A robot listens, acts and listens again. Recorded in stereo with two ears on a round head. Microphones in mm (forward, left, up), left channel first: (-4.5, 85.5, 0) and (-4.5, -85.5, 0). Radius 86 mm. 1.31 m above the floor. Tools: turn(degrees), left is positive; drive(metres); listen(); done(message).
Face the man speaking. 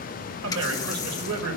turn(degrees=-90)
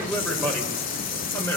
turn(degrees=15)
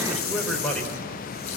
done("Facing the man speaking.")